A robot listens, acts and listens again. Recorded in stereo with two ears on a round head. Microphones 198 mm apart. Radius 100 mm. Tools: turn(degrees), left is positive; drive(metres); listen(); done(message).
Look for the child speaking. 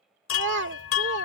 turn(degrees=-55)
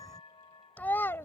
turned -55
turn(degrees=10)
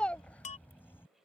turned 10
done("Facing the child speaking.")